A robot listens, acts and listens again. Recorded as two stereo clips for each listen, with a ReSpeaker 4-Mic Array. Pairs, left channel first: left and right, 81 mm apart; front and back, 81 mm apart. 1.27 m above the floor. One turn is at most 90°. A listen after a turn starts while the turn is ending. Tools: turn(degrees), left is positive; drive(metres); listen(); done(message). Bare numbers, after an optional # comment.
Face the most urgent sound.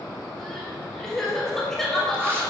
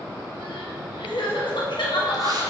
done("Found it: crying, straight ahead, 1 to 2 m away.")